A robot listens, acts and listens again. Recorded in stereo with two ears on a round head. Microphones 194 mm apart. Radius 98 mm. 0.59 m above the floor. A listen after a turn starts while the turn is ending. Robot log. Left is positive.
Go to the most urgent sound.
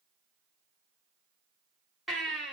cmd yaw +30
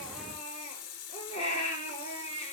note: So it is at 150° left.
cmd yaw +150
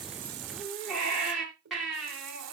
cmd fwd 1.0
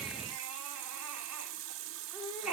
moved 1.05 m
cmd fwd 1.0
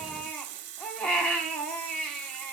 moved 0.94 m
cmd fwd 1.0
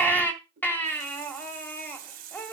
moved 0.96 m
note: The baby crying is now 10° left.
cmd yaw +10
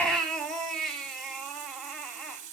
cmd fwd 1.0
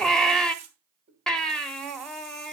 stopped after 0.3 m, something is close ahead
end: Arrived at the baby crying, straight ahead.